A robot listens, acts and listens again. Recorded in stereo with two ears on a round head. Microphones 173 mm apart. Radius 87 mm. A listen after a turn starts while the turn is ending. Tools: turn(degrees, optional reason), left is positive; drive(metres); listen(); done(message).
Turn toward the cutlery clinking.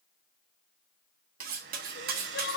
turn(degrees=-50, reason="The cutlery clinking: about 50° right or 130° right.")
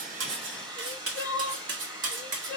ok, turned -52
turn(degrees=-75, reason="So it is at 75° right.")
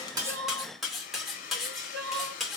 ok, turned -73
done("Found it: cutlery clinking, straight ahead, 2 to 4 m away.")